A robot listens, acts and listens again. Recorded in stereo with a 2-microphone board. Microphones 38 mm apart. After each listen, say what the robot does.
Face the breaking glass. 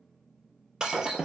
Turn 20° right.
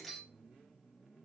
Found it: breaking glass, straight ahead, 1 to 2 m away.